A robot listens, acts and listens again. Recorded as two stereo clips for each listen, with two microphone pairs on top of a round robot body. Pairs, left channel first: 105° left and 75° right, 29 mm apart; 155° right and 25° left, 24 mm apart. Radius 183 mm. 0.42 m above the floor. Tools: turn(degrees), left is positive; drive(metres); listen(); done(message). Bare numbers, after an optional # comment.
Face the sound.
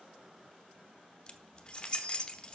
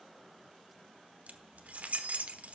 # The keys jangling: 40° left.
turn(40)
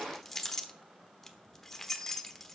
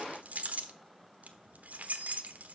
# The keys jangling is now 20° left.
turn(20)
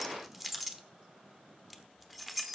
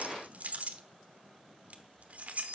done("Found it: keys jangling, straight ahead.")